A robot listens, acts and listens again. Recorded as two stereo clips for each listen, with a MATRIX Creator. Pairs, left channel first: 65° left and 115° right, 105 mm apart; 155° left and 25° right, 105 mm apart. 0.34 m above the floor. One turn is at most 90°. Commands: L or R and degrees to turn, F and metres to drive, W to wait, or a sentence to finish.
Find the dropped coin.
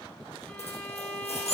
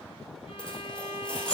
L75
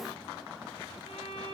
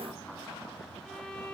Facing where the dropped coin came from. I can't hear it now.